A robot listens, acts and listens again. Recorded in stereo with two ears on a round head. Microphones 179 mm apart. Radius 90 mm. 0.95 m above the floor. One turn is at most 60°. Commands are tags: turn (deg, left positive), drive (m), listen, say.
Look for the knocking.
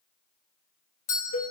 <listen/>
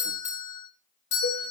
<listen/>
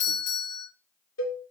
<say>I can't make out knocking, only a doorbell and a cowbell.</say>